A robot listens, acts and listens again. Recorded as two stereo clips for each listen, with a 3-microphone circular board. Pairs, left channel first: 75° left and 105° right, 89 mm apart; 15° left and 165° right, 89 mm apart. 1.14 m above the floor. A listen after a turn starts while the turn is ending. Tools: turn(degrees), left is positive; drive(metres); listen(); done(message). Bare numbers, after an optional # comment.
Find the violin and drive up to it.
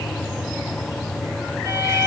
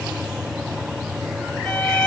# The violin: 70° right.
turn(-70)
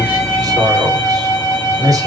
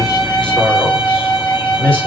drive(1.0)
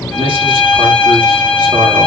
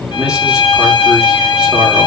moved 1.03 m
drive(1.0)
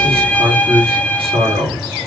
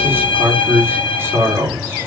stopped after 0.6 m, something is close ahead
done("I am next to the violin.")